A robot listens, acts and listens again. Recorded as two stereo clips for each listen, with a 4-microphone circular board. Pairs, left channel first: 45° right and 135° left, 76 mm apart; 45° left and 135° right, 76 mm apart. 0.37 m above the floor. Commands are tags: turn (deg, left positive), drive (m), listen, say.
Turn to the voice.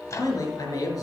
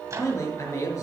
<say>Found it: a man speaking, straight ahead.</say>